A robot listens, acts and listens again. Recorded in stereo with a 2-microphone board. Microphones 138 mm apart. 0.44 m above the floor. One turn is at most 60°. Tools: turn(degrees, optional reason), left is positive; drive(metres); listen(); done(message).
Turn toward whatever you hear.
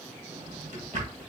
turn(degrees=-60, reason="The drawer: about 75° right or 105° right.")
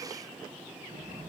turn(degrees=-25, reason="So it is at 25° right.")
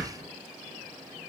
done("Found it: a drawer, straight ahead.")